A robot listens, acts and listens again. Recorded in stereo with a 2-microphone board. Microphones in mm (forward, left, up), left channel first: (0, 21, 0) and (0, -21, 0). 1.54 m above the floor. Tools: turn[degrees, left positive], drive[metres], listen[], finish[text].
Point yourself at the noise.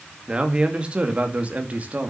Thought: The man speaking: about 40° right or 140° right.
Action: turn[-40]
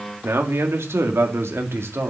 Thought: So it is at 95° right.
Action: turn[-95]
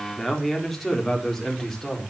Thought: The man speaking is now 10° left.
Action: turn[10]
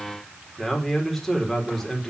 Action: finish[Found it: a man speaking, straight ahead.]